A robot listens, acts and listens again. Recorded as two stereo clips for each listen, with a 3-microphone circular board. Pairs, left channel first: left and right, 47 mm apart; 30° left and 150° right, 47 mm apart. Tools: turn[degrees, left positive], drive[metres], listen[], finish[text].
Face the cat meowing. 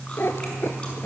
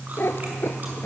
Thought: The cat meowing: 60° left.
Action: turn[60]
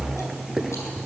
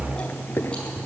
Action: finish[Found it: a cat meowing, straight ahead.]